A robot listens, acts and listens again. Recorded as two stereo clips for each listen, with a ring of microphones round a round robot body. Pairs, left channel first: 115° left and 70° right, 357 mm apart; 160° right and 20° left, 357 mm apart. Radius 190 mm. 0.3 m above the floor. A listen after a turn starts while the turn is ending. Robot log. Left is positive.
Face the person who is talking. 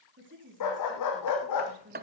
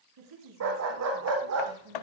note: The woman speaking: 10° right.
cmd yaw -10
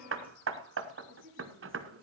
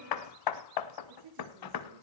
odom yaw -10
end: Found it: a woman speaking, straight ahead.